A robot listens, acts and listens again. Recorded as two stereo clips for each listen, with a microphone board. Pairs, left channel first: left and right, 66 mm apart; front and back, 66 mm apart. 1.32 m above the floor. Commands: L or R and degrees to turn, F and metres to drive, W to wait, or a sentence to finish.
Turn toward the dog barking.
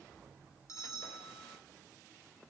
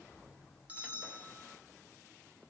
W
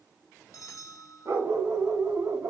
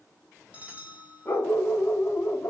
R50
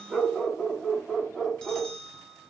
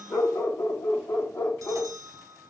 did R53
Facing the dog barking.